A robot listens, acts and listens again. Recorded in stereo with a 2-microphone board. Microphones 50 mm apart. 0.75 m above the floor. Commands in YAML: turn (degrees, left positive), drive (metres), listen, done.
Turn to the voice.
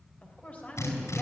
turn: 30
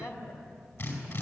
turn: 120
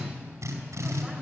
listen: true
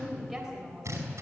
done: "Facing the woman speaking."